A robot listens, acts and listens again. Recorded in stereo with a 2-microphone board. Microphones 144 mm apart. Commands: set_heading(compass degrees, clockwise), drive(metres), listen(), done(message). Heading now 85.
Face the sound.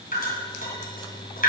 set_heading(355)
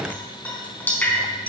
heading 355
set_heading(345)
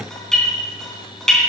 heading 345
done("Found it: dripping, straight ahead.")